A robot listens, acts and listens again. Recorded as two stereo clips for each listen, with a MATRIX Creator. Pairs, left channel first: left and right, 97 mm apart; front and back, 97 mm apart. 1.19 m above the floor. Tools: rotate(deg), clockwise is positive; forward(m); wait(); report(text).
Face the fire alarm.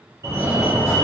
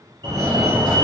rotate(145)
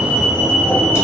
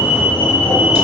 rotate(35)
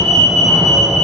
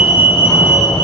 report("Facing the fire alarm.")